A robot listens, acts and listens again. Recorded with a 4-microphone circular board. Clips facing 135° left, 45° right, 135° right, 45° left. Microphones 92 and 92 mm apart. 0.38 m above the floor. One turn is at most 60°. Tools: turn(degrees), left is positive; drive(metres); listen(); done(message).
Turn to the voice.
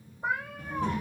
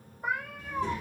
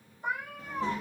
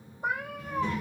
turn(degrees=60)
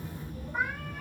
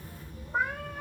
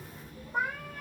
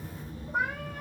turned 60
turn(degrees=60)
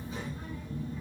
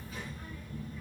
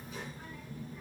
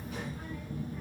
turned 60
turn(degrees=60)
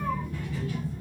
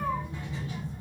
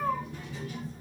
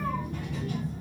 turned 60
turn(degrees=20)
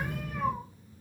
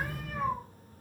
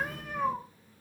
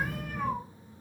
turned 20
done("Facing the child speaking, under 1 m away.")